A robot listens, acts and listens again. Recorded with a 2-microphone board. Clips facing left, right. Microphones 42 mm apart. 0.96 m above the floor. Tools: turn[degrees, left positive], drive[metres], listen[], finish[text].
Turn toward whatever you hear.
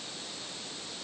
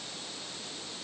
Action: listen[]
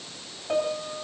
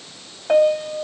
Thought: The piano: about 60° right or 120° right.
Action: turn[-60]
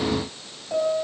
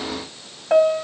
Thought: So it is at 60° right.
Action: turn[-60]
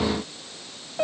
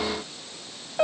Thought: The piano is now 10° right.
Action: turn[-10]
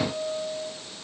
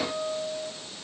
Action: finish[Facing the piano, 1 to 2 m away.]